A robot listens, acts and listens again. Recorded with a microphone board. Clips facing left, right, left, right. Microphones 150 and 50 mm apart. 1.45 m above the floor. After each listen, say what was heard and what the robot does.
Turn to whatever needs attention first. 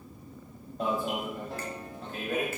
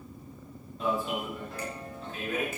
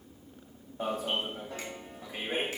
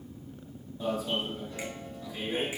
The alarm: about 60° left or 120° left. Turn 60° left.
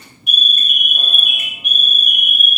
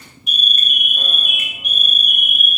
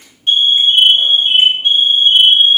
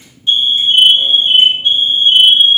So it is at 65° left. Turn 65° left.
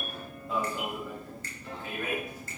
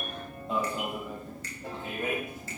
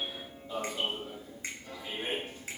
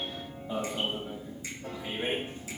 The alarm is now 25° right. Turn 25° right.
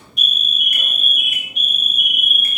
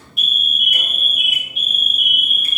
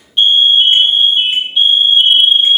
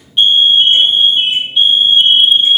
Facing the alarm.